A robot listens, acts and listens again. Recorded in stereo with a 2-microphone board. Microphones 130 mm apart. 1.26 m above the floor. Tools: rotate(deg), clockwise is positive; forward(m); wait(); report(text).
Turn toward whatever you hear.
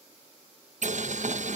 rotate(70)
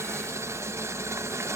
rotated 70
rotate(25)
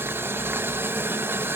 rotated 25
rotate(20)
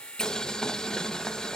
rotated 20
report("Found it: boiling, straight ahead.")